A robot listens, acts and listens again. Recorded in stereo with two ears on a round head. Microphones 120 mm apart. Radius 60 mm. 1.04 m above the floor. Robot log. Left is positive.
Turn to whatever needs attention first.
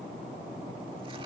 cmd idle
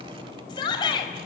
note: The shout: about 35° left or 145° left.
cmd yaw +35
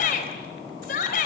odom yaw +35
note: So it is at 110° left.
cmd yaw +110
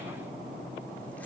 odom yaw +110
cmd idle
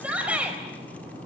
note: The shout is now 10° right.
cmd yaw -10
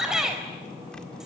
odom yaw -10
end: Facing the shout.